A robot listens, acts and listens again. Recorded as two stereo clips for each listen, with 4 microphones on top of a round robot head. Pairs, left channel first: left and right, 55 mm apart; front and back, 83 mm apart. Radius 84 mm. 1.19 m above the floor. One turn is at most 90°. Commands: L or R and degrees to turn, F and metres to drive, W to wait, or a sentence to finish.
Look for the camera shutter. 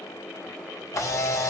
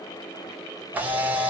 L90
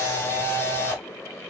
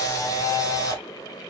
L45
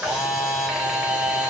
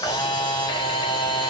R10
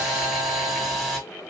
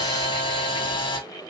Facing the camera shutter, under 1 m away.